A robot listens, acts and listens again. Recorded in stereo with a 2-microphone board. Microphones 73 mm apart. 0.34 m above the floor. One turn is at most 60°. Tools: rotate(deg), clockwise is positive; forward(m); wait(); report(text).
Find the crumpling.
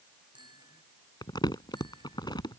rotate(-60)
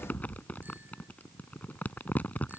rotate(-25)
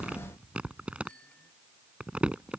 rotate(15)
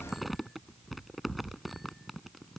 report("Found it: crumpling, straight ahead.")